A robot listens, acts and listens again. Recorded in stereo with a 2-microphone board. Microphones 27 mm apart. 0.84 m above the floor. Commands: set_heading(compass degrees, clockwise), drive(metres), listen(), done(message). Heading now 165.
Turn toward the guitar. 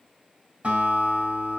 set_heading(230)
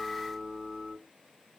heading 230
done("Facing the guitar.")